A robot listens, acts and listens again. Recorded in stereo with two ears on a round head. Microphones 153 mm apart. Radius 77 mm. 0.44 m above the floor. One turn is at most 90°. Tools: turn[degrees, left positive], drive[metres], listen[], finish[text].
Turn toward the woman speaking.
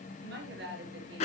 Thought: The woman speaking: about 70° right or 110° right.
Action: turn[-70]
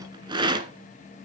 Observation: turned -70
Action: listen[]
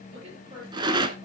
Thought: So it is at 30° right.
Action: turn[-30]
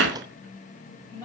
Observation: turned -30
Thought: The woman speaking is now 15° left.
Action: turn[15]
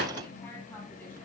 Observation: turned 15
Action: listen[]
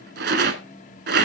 Action: listen[]
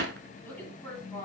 Thought: The woman speaking is now 10° left.
Action: turn[10]
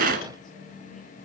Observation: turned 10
Action: listen[]
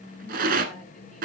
Action: listen[]
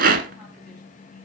Action: finish[I heard a woman speaking from this way, but can't make it out now.]